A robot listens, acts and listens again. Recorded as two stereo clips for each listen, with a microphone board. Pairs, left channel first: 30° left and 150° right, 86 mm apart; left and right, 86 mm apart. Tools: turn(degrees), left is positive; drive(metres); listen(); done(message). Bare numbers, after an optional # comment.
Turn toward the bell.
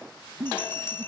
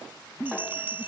# The bell: 25° right.
turn(-25)
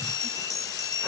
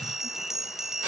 done("Facing the bell.")